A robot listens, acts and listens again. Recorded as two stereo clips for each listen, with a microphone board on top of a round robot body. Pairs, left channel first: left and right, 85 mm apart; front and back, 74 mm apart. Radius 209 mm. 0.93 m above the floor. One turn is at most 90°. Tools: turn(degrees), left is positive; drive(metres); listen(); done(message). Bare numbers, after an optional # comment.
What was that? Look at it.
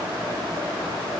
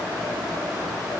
listen()
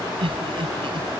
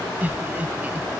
# The laughter: 110° right.
turn(-90)
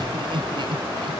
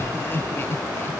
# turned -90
# The laughter is now 60° right.
turn(-60)
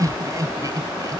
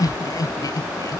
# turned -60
# The laughter is now 40° right.
turn(-40)
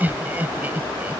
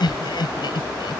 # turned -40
# The laughter is now 20° right.
turn(-20)
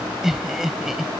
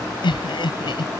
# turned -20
done("Facing the laughter.")